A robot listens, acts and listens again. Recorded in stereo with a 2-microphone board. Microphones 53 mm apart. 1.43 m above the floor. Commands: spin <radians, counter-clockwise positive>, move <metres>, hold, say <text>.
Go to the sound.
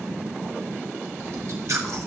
spin -1.22
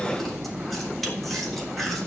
move 1.0
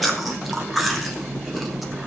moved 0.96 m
move 1.0
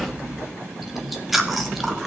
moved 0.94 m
move 1.0
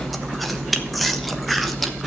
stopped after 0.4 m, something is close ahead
say I am next to the chewing.